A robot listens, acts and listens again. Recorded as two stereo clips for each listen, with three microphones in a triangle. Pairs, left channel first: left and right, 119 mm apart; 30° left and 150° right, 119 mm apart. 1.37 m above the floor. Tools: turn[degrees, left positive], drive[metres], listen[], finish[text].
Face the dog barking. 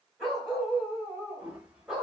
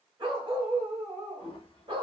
Thought: The dog barking: 175° right.
Action: turn[-175]
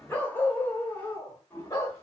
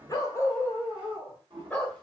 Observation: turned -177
Thought: The dog barking is now 105° left.
Action: turn[105]
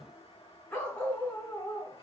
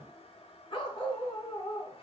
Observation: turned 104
Thought: The dog barking is now 25° left.
Action: turn[25]
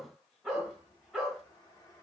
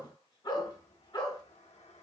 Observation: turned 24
Action: finish[Found it: a dog barking, straight ahead.]